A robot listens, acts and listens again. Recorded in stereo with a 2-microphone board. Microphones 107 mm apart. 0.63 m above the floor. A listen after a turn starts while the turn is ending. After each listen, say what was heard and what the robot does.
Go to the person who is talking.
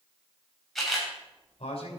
The man speaking: about 70° left or 110° left. Turn 70° left.
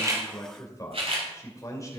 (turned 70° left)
So it is at 30° left. Turn 30° left.
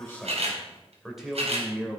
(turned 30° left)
Drive 1.0 m forward.
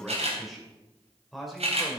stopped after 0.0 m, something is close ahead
Blocked. The man speaking is further on, straight ahead.